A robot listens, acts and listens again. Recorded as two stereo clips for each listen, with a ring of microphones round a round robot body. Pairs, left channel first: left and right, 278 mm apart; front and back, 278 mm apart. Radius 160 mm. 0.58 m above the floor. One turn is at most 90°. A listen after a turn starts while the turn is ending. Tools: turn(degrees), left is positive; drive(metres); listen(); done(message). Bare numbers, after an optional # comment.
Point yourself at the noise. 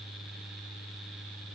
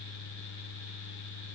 listen()
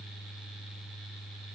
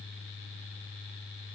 listen()
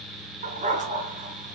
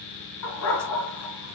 # The dog barking: 25° right.
turn(-25)
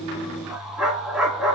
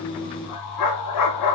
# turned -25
done("Found it: a dog barking, straight ahead.")